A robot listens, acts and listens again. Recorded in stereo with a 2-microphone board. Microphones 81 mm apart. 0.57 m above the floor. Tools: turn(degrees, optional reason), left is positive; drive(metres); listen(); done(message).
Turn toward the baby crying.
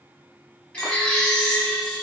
turn(degrees=30)
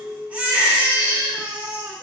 turn(degrees=-15, reason="So it is at 15° right.")
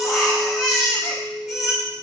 done("Found it: a baby crying, straight ahead.")